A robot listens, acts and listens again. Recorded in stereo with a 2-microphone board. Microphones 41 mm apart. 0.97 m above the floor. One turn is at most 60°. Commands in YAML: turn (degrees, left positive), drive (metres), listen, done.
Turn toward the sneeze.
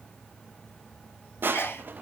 turn: 60
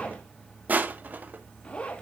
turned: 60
listen: true
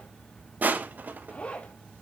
done: "I heard a sneeze, but can't make it out now. It was about 15° left or 45° left."